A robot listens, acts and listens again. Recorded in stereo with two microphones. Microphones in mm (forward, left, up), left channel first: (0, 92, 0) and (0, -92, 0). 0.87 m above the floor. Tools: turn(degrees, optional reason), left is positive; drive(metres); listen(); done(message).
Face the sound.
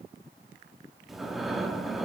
turn(degrees=30)
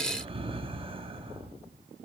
turn(degrees=-30, reason="So it is at 30° right.")
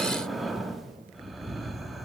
done("Found it: breathing, straight ahead, under 1 m away.")